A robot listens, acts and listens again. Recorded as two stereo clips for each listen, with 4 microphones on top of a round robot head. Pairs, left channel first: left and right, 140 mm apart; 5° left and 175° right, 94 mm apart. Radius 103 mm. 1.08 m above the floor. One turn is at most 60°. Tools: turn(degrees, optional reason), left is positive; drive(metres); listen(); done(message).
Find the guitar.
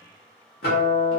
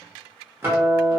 turn(degrees=60, reason="The guitar: 120° left.")
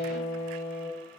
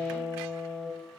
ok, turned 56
turn(degrees=60, reason="The guitar is now 65° left.")
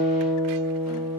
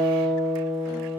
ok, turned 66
done("Facing the guitar.")